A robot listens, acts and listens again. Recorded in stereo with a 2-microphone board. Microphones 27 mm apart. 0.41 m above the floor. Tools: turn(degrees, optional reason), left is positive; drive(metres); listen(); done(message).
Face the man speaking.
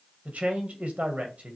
turn(degrees=-60, reason="The man speaking: about 60° right or 120° right.")
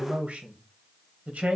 turn(degrees=-60, reason="So it is at 60° right.")
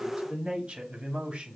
turn(degrees=-45, reason="The man speaking is now 45° right.")
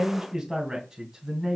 turn(degrees=-15, reason="The man speaking is now 15° right.")
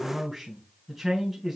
done("Found it: a man speaking, straight ahead, 2 to 4 m away.")